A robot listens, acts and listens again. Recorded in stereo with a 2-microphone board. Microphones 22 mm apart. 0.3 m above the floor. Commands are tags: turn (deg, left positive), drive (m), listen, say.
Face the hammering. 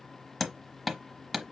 <turn deg="30"/>
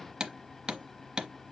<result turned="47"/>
<turn deg="-40"/>
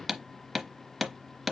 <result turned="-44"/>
<say>Facing the hammering.</say>